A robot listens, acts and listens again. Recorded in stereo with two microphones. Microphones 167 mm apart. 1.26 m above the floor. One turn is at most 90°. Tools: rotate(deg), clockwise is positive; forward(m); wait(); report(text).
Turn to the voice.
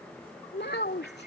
rotate(-90)
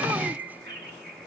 wait()
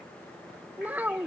rotate(10)
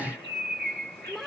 report("Found it: a child speaking, straight ahead.")